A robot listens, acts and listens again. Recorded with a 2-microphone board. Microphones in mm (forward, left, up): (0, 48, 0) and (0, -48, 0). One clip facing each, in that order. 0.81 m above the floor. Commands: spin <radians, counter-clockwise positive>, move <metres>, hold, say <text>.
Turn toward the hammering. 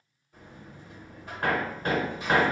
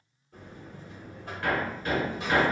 spin 0.96
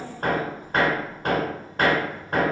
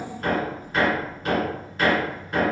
spin 1.13
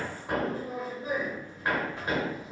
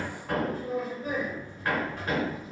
spin 0.26
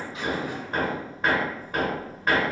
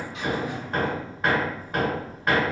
say Facing the hammering.